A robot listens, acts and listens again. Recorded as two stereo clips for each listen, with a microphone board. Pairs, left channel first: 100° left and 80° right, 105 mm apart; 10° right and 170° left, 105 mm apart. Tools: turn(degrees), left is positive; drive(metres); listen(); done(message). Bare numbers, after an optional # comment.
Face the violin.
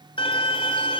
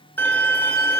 # The violin: 60° left.
turn(60)
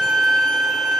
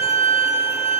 # The violin is now 10° left.
turn(10)
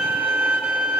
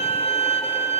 done("Found it: a violin, straight ahead, 2 to 4 m away.")